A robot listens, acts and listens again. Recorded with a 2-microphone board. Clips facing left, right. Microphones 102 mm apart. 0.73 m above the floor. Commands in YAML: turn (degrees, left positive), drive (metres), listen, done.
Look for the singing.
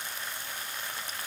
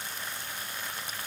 listen: true
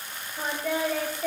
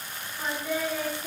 turn: 90
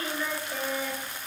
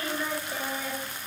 done: "Facing the singing, 1 to 2 m away."